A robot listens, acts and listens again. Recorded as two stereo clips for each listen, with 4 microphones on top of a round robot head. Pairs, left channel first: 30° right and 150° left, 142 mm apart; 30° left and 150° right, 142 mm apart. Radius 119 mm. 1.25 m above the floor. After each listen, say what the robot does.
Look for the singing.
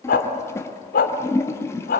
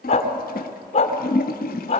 Keep listening.
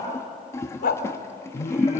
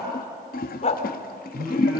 Turn 70° right.
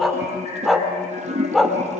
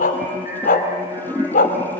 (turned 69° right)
Found it: singing, straight ahead, over 4 m away.